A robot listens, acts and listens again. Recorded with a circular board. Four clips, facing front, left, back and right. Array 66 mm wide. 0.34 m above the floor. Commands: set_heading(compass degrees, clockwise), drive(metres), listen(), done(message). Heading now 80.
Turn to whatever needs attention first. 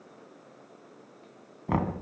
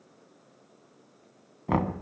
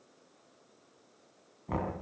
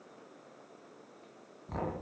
listen()
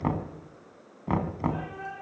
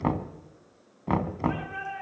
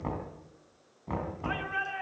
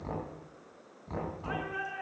set_heading(255)
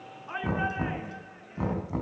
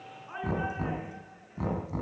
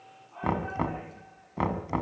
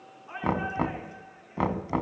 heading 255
done("Found it: a shout, straight ahead, over 4 m away.")